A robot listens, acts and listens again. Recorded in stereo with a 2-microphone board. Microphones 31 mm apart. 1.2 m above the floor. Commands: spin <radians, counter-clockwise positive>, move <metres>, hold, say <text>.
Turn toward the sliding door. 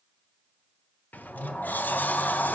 spin 1.31
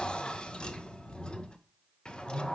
spin 0.52
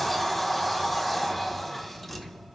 say Found it: a sliding door, straight ahead.